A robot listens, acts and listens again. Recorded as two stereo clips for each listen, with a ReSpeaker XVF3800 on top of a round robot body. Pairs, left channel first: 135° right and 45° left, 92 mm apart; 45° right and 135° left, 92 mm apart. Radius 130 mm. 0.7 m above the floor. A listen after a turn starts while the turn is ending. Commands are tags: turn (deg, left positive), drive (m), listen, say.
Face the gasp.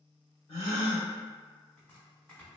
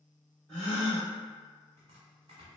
<turn deg="-125"/>
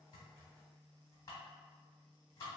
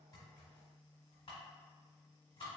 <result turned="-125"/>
<say>I heard a gasp from this way, but can't make it out now.</say>